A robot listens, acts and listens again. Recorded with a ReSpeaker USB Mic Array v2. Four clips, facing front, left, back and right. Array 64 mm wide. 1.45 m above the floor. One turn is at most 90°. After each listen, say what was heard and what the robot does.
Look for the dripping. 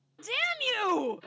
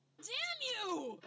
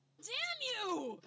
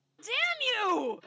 Keep listening.
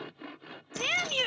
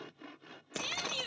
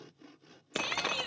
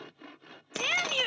The dripping: 170° right. Turn 90° right.
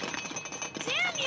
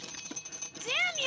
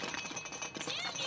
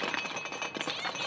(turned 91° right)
The dripping is now 80° right. Turn 80° right.
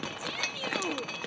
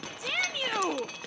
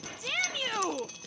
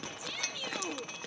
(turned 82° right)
Facing the dripping.